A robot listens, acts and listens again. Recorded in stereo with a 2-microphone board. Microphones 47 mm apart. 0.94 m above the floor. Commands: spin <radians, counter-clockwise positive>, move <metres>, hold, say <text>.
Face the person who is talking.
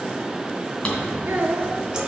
spin -0.96
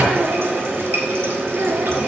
hold
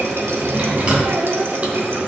hold
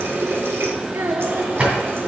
spin -1.31
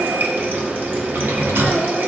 hold
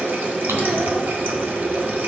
hold
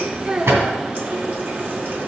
spin -0.35
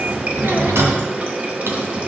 hold
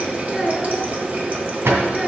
say Found it: a child speaking, straight ahead.